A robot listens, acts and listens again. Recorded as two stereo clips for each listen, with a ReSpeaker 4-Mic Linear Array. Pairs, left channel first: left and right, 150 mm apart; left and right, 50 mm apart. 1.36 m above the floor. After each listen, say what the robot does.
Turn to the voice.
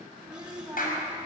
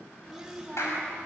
Turn 15° right.
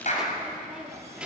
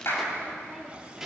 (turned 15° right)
Turn 30° right.
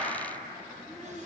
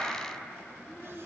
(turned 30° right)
Turn 25° left.
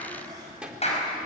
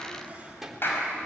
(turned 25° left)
Facing the child speaking, 2 to 4 m away.